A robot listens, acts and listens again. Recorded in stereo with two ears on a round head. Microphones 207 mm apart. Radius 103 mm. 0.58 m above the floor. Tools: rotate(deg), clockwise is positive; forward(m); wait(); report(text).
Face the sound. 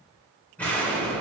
rotate(-30)
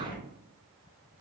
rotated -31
rotate(-140)
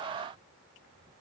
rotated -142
report("Facing where the explosion came from. I can't hear it now.")